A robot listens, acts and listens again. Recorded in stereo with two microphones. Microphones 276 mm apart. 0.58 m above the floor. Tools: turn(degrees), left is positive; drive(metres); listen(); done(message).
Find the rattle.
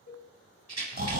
turn(degrees=-70)
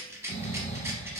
turn(degrees=-10)
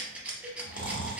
done("Facing the rattle.")